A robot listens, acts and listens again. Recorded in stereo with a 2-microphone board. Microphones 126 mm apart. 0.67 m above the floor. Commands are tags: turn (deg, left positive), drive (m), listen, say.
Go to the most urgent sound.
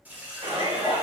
<turn deg="-55"/>
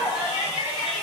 <turn deg="-20"/>
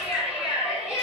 <drive m="1.0"/>
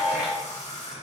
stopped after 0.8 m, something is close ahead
<turn deg="-15"/>
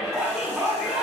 <turn deg="-10"/>
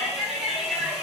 <say>I am next to the shout.</say>